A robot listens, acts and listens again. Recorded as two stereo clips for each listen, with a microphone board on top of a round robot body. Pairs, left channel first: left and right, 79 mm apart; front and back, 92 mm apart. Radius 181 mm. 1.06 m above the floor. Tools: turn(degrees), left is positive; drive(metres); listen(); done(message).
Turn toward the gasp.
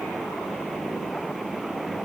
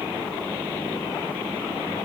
listen()
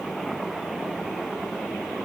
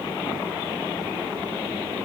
listen()
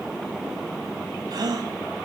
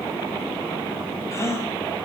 turn(degrees=-60)
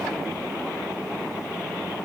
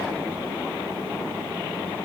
done("I heard a gasp from this way, but can't make it out now.")